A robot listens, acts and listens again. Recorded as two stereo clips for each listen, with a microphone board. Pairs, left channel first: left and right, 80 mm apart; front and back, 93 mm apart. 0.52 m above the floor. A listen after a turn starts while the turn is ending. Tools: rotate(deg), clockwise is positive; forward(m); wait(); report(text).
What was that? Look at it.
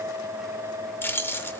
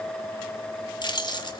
rotate(-30)
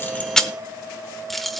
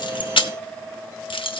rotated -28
report("Facing the keys jangling.")